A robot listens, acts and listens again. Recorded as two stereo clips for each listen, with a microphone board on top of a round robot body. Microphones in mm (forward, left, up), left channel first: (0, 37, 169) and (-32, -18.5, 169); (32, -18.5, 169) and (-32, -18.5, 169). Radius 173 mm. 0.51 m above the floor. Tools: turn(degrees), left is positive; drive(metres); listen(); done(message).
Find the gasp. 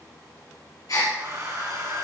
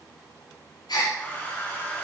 turn(degrees=20)
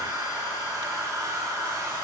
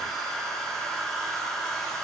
done("I heard a gasp from this way, but can't make it out now.")